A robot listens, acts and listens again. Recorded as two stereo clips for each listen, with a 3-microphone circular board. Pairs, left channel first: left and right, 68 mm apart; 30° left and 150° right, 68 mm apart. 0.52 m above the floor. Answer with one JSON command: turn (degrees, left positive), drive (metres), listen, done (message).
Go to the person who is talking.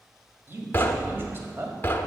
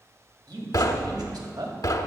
{"turn": -150}
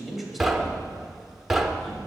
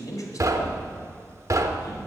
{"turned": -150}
{"drive": 1.0}
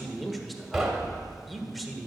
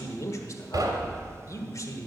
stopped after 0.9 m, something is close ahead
{"done": "Arrived at the man speaking, straight ahead."}